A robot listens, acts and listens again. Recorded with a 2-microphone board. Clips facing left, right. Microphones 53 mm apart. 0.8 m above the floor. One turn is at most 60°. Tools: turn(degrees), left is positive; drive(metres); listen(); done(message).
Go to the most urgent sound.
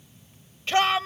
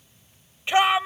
turn(degrees=-20)
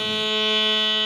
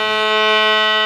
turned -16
listen()
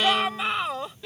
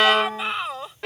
drive(metres=1.0)
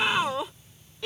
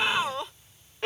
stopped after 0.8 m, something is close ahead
done("Blocked. The shout is further on, straight ahead.")